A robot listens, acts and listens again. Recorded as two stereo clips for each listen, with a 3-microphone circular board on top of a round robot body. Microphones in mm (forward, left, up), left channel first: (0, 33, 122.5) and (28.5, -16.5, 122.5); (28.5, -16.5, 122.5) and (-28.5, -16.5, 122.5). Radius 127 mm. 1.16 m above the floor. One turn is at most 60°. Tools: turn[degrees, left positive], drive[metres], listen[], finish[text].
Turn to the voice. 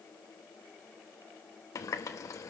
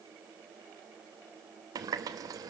Action: listen[]
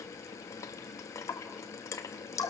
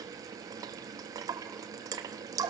Action: listen[]
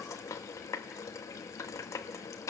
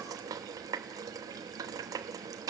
Action: finish[I can't make out anyone speaking, only a running tap.]